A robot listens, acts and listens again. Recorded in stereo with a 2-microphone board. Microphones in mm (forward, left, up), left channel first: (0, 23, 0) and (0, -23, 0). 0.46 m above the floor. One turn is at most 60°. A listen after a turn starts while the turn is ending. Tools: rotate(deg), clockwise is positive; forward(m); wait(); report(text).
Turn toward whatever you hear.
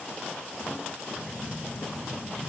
rotate(-40)
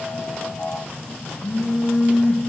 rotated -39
rotate(-60)
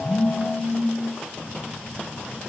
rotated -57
rotate(-45)
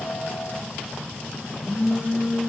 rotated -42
report("Facing the phone buzzing, over 4 m away.")